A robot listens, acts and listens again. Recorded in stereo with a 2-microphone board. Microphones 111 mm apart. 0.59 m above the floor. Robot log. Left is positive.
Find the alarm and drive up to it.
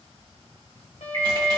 note: The alarm: about 65° right or 115° right.
cmd yaw -65
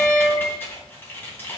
cmd idle
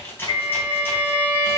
note: So it is at 50° right.
cmd yaw -50
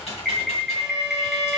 cmd fwd 1.0
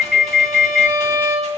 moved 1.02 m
cmd fwd 1.0
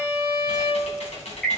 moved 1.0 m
cmd fwd 1.0
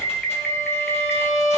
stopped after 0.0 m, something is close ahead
note: The alarm is now 10° left.
cmd yaw +10
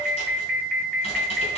end: Arrived at the alarm, straight ahead.